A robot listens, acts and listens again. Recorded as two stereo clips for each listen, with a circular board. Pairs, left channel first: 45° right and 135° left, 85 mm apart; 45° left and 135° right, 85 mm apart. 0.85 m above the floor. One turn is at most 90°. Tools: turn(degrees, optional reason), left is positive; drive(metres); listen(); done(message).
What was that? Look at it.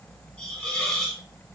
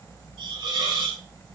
turn(degrees=-90, reason="The hiss: 120° right.")
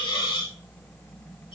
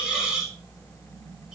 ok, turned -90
turn(degrees=-50, reason="The hiss is now 50° right.")
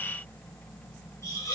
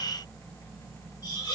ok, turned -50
turn(degrees=10, reason="The hiss is now 10° left.")
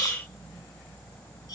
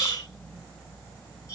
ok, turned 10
done("Facing the hiss.")